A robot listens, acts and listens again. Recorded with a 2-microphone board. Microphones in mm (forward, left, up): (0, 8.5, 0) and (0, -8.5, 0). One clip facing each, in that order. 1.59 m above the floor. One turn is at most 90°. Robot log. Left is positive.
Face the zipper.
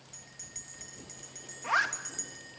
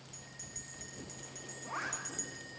cmd yaw +90
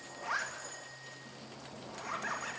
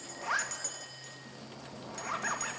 note: So it is at 15° right.
cmd yaw -15
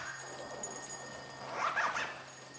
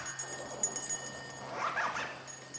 end: Found it: a zipper, straight ahead.